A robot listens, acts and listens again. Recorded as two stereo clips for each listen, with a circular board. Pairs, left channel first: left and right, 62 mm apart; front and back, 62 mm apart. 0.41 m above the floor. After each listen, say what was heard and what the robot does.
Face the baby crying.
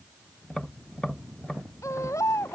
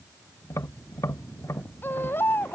The baby crying: 55° left. Turn 55° left.
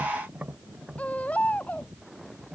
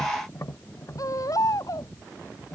The baby crying is now 25° left. Turn 25° left.
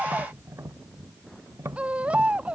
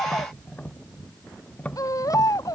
The baby crying is now 20° right. Turn 20° right.
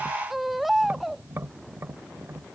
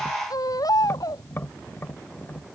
Facing the baby crying.